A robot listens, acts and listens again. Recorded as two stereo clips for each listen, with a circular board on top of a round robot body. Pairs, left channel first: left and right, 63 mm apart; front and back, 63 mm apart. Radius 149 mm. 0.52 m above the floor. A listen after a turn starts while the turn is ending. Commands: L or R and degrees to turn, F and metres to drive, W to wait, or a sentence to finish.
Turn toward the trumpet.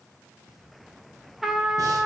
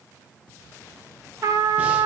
R175
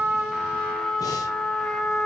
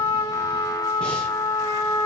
L10
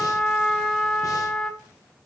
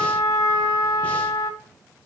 Found it: a trumpet, straight ahead, 1 to 2 m away.